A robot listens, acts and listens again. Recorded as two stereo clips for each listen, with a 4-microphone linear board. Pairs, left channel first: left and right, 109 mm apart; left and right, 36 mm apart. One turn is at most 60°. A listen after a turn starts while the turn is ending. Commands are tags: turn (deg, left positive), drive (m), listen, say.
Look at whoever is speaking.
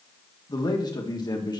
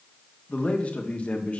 <turn deg="40"/>
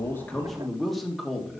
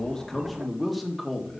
<say>Found it: a man speaking, straight ahead.</say>